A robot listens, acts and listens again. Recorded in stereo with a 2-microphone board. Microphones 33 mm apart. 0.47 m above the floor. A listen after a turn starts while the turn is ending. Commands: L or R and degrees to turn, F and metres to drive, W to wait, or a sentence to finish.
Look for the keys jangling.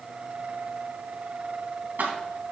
R75
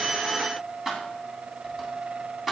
Found it: keys jangling, straight ahead, 2 to 4 m away.